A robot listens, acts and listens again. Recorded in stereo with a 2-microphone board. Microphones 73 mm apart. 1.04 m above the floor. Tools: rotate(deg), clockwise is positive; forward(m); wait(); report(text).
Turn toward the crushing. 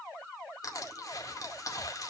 rotate(-50)
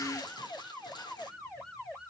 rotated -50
rotate(-80)
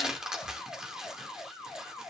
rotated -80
rotate(10)
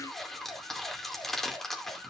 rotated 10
report("Facing the crushing, 2 to 4 m away.")